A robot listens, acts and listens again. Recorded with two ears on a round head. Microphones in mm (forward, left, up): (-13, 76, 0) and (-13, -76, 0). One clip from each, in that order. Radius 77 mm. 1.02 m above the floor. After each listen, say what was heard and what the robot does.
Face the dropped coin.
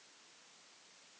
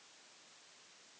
Keep listening.
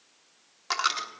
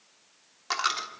Turn 30° left.
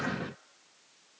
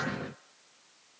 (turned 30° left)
Keep listening.
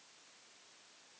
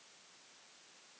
I heard a dropped coin, but can't make it out now. It was about 20° right or 140° left.